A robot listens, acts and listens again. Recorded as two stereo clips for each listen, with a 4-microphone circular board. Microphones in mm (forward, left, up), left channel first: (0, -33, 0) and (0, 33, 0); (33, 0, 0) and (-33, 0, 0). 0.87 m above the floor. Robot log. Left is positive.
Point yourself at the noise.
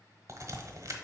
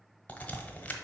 note: The crack: 65° left.
cmd yaw +65
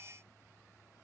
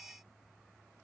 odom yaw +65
end: Facing where the crack came from. I can't hear it now.